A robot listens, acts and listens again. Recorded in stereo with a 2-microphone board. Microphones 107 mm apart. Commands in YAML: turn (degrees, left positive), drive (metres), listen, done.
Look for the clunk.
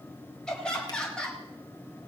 listen: true
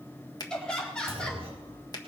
turn: -65
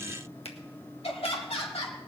listen: true
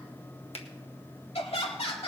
done: "I heard a clunk, but can't make it out now. It was about straight ahead or 50° right."